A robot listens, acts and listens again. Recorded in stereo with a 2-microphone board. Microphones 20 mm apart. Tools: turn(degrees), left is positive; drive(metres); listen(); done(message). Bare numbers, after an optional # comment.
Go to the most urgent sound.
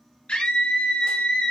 # The scream: about 70° left or 110° left.
turn(70)
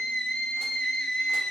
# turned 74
# So it is at 35° left.
turn(35)
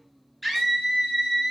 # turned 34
drive(1.0)
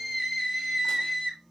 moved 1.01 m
drive(1.0)
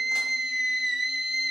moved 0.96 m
drive(1.0)
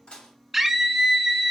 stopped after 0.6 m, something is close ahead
done("I am next to the scream.")